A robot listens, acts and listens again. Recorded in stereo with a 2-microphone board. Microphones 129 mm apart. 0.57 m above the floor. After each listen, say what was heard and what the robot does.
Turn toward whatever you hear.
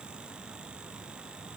Keep listening.
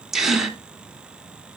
Turn 30° right.
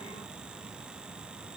Keep listening.
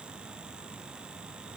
I heard a gasp, but can't make it out now. It was about 25° left or 145° right.